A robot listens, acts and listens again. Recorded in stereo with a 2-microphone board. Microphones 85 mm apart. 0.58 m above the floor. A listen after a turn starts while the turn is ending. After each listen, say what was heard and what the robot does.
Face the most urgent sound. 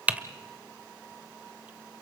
Keep listening.
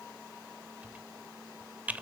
Keep listening.
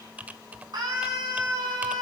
The scream: about 60° right or 120° right. Turn 60° right.
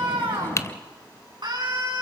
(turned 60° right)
So it is at 65° right. Turn 65° right.
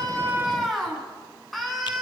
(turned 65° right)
Facing the scream.